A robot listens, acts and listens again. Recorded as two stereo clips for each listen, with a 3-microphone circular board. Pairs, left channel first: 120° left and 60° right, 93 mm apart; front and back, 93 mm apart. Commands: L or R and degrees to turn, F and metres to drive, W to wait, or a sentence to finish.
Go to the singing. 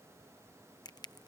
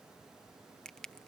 W
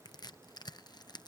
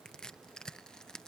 W
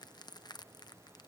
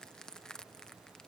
I can't make out singing, only crushing.